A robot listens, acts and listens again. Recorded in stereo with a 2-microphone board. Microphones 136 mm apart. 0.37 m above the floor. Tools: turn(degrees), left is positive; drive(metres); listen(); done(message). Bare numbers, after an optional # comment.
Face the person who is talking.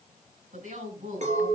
# The woman speaking: about 70° right or 110° right.
turn(-70)
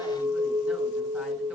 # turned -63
listen()
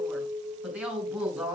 # So it is at 10° right.
turn(-10)
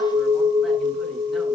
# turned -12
listen()
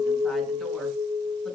listen()
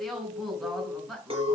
done("Found it: a woman speaking, straight ahead.")